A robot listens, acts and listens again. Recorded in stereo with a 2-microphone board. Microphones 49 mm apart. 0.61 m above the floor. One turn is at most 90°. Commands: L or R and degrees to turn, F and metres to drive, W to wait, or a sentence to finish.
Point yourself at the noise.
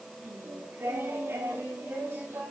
R55
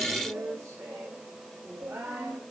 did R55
R60
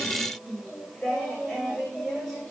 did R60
Found it: singing, straight ahead, over 4 m away.